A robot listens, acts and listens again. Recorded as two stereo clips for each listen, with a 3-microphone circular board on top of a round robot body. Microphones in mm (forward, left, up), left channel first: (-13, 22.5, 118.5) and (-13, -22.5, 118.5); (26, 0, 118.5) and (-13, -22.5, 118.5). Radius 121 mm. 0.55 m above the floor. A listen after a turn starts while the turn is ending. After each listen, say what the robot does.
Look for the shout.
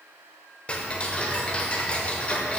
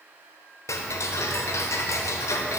Keep listening.
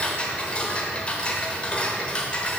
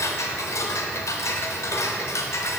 Keep listening.
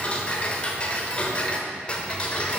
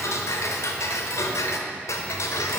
I can't make out a shout, only ticking.